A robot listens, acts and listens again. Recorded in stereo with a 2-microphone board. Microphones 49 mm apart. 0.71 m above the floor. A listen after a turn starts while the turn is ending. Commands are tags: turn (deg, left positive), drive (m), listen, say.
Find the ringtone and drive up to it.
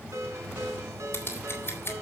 <turn deg="-90"/>
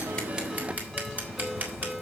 <drive m="1.0"/>
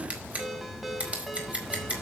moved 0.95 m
<drive m="1.0"/>
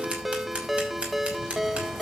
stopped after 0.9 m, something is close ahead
<say>I am next to the ringtone.</say>